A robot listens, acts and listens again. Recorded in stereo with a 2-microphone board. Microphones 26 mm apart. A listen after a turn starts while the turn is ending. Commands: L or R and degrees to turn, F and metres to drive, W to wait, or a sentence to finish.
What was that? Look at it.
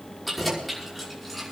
L30
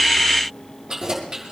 R25
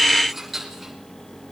Facing the keys jangling, over 4 m away.